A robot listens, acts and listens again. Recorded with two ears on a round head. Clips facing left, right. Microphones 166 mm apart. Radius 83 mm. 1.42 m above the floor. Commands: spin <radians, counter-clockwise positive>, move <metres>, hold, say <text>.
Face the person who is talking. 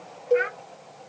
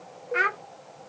spin -1.05
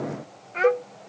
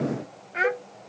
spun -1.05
spin -0.17
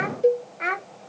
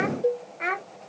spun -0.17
say Facing the child speaking.